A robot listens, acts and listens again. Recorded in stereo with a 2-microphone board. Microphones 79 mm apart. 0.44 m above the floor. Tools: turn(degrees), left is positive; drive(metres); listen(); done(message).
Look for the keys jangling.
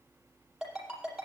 listen()
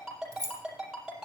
turn(degrees=-50)
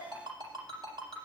listen()
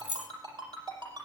turn(degrees=-15)
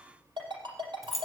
done("Facing the keys jangling, under 1 m away.")